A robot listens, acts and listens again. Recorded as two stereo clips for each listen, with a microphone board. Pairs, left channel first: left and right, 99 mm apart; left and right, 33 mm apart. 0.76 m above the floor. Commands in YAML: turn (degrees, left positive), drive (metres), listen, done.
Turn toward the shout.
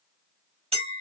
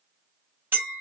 listen: true
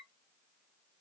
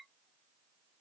listen: true
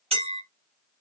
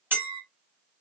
done: "I can't make out a shout to turn to."